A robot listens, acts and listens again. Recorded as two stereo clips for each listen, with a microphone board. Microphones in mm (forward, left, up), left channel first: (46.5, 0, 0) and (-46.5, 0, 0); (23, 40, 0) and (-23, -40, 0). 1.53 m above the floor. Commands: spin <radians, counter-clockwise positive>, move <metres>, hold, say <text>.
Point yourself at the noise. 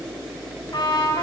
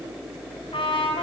spin 0.79
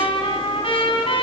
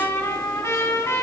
say Facing the trumpet, over 4 m away.